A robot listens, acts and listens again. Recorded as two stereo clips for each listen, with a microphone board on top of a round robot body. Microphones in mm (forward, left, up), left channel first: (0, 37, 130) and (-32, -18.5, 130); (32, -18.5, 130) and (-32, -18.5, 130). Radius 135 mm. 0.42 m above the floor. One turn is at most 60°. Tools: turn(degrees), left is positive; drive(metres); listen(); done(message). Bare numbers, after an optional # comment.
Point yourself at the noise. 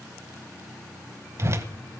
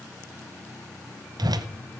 # The whoosh: 170° right.
turn(-60)
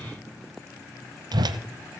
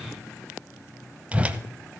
# The whoosh is now 110° right.
turn(-60)
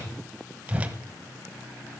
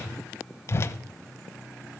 # The whoosh is now 50° right.
turn(-50)
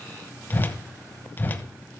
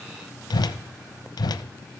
done("Found it: a whoosh, straight ahead, 1 to 2 m away.")